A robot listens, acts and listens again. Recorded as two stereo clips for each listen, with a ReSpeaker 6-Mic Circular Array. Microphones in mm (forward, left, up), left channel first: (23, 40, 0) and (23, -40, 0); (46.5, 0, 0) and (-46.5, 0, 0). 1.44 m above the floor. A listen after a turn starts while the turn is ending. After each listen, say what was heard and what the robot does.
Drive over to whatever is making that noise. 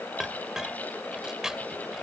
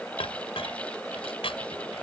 Drive 1.0 m forward.
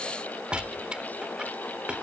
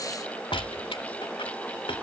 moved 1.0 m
The clink is now 15° right. Turn 15° right.
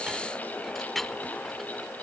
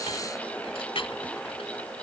Drive 1.0 m forward.
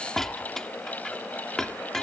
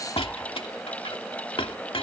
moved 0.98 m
Drive 1.0 m forward.
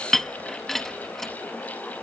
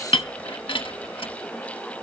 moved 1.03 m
Drive 1.0 m forward.
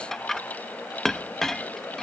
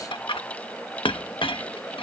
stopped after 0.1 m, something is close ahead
I am next to the clink.